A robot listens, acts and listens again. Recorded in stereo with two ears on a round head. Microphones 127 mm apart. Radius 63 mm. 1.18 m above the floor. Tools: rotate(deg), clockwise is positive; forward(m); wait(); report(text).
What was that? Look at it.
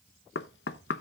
rotate(-90)
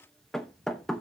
report("Facing the knocking.")